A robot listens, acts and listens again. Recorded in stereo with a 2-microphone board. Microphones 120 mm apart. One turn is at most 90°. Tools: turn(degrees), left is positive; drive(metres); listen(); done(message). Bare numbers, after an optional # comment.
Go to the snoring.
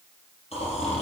# The snoring: about 60° left or 120° left.
turn(60)
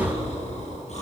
# So it is at 60° left.
turn(60)
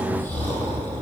# The snoring is now 10° left.
turn(10)
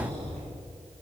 drive(1.0)
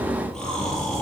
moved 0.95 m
drive(1.0)
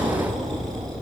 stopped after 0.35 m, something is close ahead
done("Blocked. The snoring is further on, straight ahead.")